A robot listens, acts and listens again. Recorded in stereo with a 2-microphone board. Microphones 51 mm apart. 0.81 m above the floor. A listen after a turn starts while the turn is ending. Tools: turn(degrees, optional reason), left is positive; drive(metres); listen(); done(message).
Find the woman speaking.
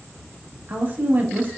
turn(degrees=-35, reason="The woman speaking: about 35° right or 145° right.")
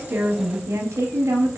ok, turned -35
turn(degrees=-110, reason="So it is at 110° right.")
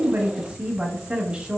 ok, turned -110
turn(degrees=-25, reason="The woman speaking is now 25° right.")
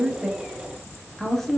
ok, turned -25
done("Found it: a woman speaking, straight ahead, under 1 m away.")